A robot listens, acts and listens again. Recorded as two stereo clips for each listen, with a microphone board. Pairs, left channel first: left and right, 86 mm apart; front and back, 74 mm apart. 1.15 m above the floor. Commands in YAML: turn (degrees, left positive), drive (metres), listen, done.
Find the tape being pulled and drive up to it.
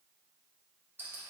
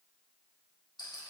listen: true
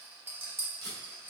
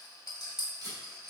turn: 145
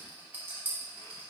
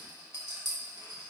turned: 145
listen: true
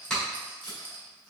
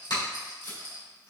turn: 10
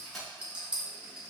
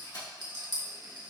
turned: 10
drive: 1.0
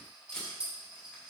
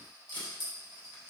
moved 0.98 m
turn: 10
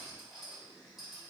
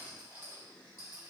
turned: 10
listen: true
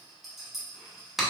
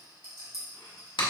drive: 1.0
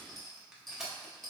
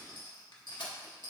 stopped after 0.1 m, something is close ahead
done: "Arrived at the tape being pulled, straight ahead."